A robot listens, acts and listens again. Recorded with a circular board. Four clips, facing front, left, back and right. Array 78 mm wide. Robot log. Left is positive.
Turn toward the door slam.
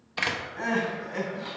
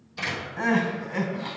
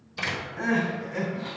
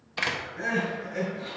note: The door slam: 35° right.
cmd yaw -35
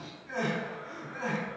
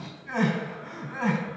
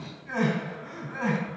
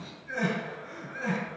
end: Facing where the door slam came from. I can't hear it now.